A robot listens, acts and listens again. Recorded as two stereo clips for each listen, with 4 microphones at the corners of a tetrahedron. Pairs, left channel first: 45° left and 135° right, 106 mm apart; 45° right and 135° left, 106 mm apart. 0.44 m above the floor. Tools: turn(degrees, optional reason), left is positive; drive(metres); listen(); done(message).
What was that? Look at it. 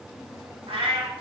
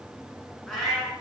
turn(degrees=-135, reason="The cat meowing: 135° right.")
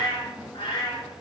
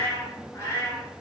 turn(degrees=15, reason="The cat meowing is now 15° left.")
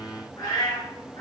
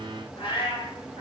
done("Facing the cat meowing.")